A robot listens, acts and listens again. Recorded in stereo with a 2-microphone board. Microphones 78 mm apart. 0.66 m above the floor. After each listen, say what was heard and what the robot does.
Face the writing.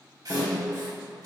The writing: about 55° right or 125° right. Turn 55° right.
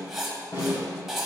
Found it: writing, straight ahead.